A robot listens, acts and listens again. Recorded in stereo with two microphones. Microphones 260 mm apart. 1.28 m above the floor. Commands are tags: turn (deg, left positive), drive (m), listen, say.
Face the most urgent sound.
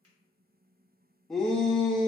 <turn deg="30"/>
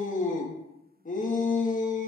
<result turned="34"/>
<turn deg="145"/>
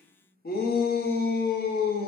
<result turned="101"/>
<turn deg="45"/>
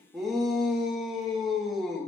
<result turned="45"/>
<say>Found it: a shout, straight ahead.</say>